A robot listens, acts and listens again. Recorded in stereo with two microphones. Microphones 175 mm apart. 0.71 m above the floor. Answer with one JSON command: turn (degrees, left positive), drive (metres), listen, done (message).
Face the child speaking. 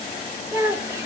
{"turn": -30}
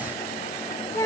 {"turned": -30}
{"turn": 15}
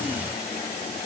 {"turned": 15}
{"listen": true}
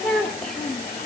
{"done": "Facing the child speaking, 1 to 2 m away."}